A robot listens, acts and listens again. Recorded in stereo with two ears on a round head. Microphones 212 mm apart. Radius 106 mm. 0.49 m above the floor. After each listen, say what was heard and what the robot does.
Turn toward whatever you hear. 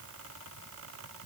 Keep listening.
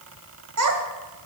The child speaking: about 70° right or 110° right. Turn 70° right.
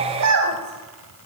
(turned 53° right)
So it is at 80° right. Turn 80° right.
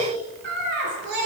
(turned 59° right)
The child speaking is now 50° right. Turn 50° right.
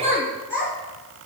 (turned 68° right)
The child speaking is now 10° left. Turn 10° left.
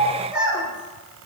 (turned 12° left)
Facing the child speaking.